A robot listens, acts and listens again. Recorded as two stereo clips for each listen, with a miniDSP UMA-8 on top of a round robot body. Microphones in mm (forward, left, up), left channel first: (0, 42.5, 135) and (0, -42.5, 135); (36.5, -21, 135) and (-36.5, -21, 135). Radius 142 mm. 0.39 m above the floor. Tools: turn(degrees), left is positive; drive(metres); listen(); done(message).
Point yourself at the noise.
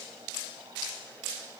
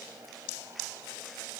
listen()
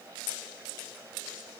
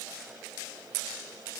listen()
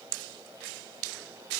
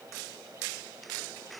done("I can't make out anything to turn to.")